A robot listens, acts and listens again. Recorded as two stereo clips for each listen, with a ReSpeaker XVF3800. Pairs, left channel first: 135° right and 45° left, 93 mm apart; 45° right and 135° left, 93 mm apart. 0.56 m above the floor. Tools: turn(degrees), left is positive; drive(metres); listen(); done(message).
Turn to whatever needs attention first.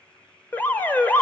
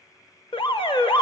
turn(degrees=-65)
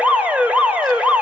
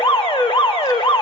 turn(degrees=-30)
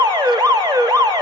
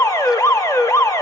turn(degrees=10)
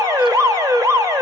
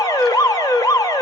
done("Found it: an alarm, straight ahead, 1 to 2 m away.")